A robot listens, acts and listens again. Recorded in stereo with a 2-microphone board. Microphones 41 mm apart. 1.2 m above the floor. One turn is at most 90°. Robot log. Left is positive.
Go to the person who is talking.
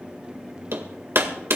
cmd idle
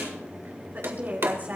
note: The woman speaking: about 50° right or 130° right.
cmd yaw -50
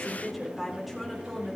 cmd fwd 1.0
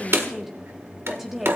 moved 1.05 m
cmd fwd 1.0
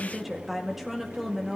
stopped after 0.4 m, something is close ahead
end: I am next to the woman speaking.